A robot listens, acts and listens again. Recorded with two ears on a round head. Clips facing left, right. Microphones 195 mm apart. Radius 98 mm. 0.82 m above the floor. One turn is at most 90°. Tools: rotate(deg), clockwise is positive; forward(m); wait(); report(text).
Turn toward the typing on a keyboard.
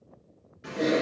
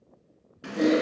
rotate(65)
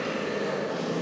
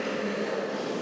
report("Found it: typing on a keyboard, straight ahead, 2 to 4 m away.")